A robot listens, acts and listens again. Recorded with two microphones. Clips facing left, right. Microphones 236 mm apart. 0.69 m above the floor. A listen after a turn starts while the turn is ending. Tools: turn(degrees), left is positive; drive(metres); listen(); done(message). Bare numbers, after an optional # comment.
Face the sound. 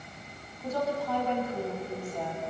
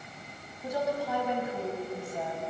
turn(-30)
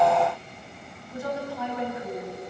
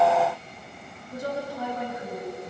# So it is at 140° right.
turn(-140)
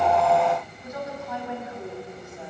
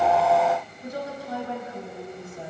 # The woman speaking is now 35° right.
turn(-35)
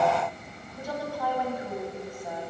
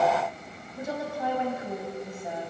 # The woman speaking is now 25° right.
turn(-25)
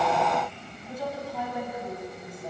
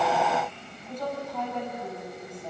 # The woman speaking is now 10° left.
turn(10)
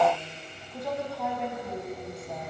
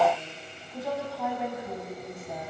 done("Found it: a woman speaking, straight ahead, over 4 m away.")